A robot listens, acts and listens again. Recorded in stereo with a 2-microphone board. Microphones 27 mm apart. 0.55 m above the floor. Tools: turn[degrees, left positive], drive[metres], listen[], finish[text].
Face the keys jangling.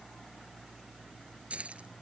Thought: The keys jangling: about 55° right or 125° right.
Action: turn[-55]
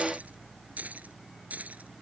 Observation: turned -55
Thought: So it is at 75° right.
Action: turn[-75]
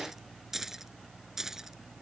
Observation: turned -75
Thought: The keys jangling is now 15° right.
Action: turn[-15]
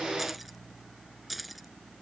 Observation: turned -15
Action: finish[Facing the keys jangling.]